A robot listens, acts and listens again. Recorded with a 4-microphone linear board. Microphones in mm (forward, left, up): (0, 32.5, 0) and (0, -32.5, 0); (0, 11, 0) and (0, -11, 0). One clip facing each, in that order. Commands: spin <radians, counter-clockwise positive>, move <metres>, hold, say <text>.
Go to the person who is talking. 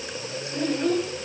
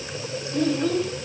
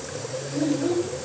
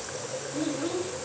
spin 0.52
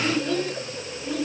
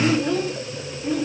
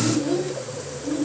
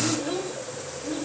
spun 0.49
spin -0.35
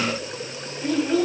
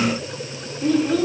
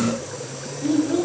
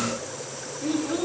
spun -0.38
move 1.0
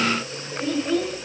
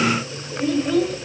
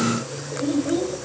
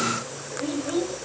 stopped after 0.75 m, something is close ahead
say Arrived at the child speaking, straight ahead.